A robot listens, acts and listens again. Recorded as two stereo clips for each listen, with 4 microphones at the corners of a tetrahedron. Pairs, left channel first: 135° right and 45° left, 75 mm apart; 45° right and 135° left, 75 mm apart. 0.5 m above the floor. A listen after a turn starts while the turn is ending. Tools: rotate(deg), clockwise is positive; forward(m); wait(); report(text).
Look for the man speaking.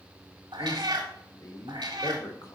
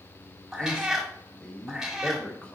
rotate(115)
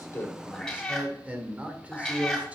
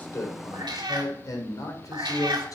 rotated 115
rotate(25)
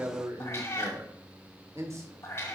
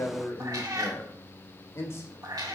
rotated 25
report("Found it: a man speaking, straight ahead, 1 to 2 m away.")